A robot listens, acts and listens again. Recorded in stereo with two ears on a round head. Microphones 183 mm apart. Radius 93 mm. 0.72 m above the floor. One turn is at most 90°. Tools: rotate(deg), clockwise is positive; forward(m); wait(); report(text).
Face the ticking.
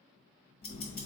rotate(-50)
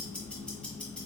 report("Found it: ticking, straight ahead.")